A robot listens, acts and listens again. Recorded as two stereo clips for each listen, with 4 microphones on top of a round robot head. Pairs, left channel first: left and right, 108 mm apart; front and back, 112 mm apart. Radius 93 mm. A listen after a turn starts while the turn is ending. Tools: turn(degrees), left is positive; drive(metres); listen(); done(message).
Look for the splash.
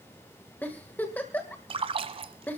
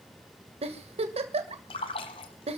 turn(degrees=-55)
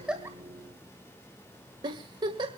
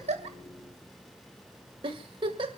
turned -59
done("I heard a splash from this way, but can't make it out now.")